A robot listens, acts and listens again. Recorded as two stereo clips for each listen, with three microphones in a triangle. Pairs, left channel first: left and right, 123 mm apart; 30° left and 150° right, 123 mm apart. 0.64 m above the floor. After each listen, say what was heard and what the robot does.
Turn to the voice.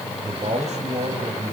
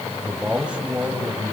The man speaking: 70° right. Turn 70° right.
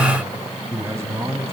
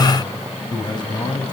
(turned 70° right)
The man speaking is now 25° right. Turn 25° right.
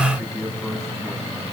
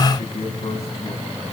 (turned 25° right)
Found it: a man speaking, straight ahead, over 4 m away.